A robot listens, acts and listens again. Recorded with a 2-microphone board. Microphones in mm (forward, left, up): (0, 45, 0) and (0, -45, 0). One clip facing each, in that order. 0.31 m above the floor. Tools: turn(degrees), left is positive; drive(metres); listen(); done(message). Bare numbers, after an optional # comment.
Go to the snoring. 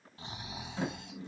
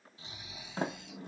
# The snoring: about 55° left or 125° left.
turn(55)
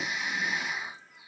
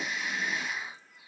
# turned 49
# So it is at 20° left.
turn(20)
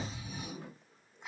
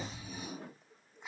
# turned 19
drive(1.0)
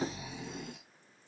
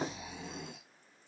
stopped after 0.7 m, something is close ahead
done("Arrived at the snoring, straight ahead.")